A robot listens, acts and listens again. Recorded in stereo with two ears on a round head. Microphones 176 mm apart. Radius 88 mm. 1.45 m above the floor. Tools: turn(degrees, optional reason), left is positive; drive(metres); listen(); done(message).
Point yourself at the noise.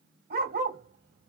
turn(degrees=-45, reason="The dog barking: about 45° right or 135° right.")
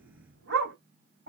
turn(degrees=-80, reason="So it is at 80° right.")
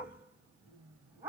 turn(degrees=-15, reason="The dog barking is now 15° right.")
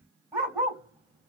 turn(degrees=-10, reason="The dog barking is now 10° right.")
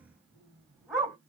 done("Found it: a dog barking, straight ahead.")